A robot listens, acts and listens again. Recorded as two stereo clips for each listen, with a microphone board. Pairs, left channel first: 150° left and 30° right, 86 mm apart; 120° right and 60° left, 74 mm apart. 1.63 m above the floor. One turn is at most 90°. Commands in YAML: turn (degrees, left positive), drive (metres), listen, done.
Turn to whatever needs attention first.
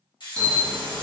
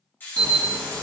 turn: 20
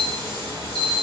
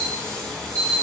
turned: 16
done: "Found it: an alarm, straight ahead."